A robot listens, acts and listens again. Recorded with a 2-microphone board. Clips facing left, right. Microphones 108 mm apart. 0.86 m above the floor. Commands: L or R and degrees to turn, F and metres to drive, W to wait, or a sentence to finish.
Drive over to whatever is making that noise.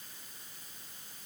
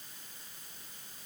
W
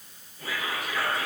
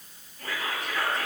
L30
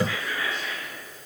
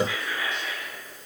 R20
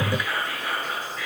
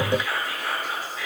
F1.0
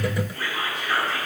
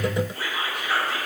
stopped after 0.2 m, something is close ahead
R10
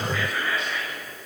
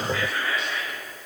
Blocked. The whispering is further on, straight ahead.